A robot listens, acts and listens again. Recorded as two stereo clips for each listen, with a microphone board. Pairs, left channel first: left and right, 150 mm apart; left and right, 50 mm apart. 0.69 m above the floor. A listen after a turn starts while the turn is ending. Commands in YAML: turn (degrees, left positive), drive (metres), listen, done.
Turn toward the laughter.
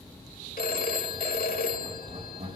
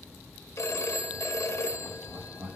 turn: -90
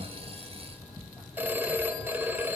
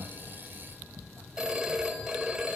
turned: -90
done: "Facing the laughter."